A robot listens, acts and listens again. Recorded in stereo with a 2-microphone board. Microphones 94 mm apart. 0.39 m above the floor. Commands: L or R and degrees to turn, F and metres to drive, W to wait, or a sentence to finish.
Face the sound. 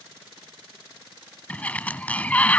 L15
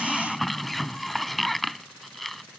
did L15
Found it: a sliding door, straight ahead.